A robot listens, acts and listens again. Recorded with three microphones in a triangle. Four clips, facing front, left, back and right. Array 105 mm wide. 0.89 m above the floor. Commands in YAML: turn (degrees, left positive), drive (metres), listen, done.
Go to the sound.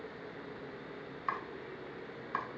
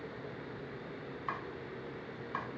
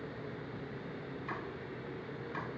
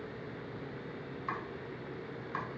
turn: 15
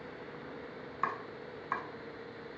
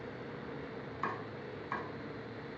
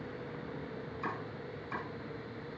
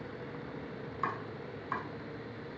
drive: 1.0
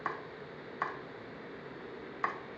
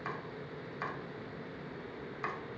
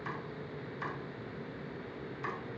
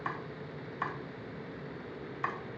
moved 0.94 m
turn: -10
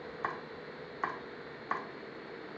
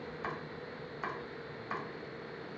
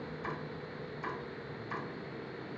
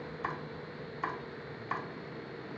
drive: 1.0
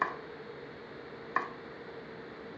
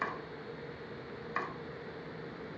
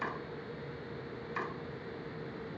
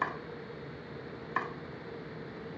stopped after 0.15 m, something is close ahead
turn: -10
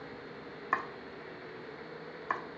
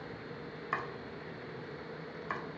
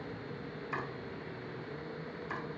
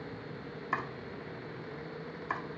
done: "Arrived at the chopping, straight ahead."